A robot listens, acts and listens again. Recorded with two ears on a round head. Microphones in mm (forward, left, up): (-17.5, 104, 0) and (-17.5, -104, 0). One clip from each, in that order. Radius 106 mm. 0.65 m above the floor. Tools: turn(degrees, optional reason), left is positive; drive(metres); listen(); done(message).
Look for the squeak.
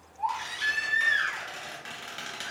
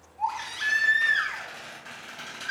turn(degrees=65, reason="The squeak: about 65° left or 115° left.")
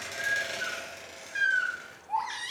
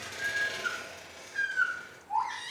turn(degrees=50, reason="So it is at 50° left.")
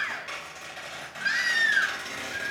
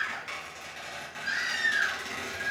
done("Found it: a squeak, straight ahead, 1 to 2 m away.")